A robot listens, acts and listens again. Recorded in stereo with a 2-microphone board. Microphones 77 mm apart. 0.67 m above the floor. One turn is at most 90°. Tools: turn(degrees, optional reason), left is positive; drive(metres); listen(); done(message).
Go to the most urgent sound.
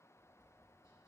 listen()
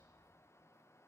listen()
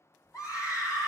turn(degrees=50, reason="The scream: about 50° left or 130° left.")
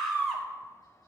drive(metres=1.0)
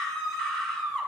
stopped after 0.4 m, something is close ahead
turn(degrees=10, reason="The scream is now 10° left.")
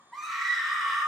done("Blocked. The scream is further on, straight ahead.")